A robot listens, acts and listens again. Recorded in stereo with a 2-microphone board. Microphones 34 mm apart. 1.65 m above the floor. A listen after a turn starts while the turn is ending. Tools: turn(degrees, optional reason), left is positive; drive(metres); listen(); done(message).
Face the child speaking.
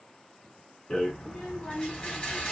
turn(degrees=30)
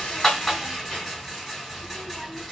listen()
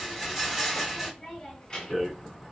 turn(degrees=20, reason="The child speaking: about 20° left or 160° left.")
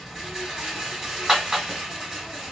listen()
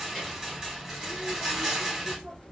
turn(degrees=30)
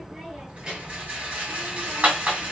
turn(degrees=-20, reason="So it is at 20° right.")
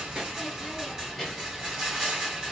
done("Found it: a child speaking, straight ahead, 2 to 4 m away.")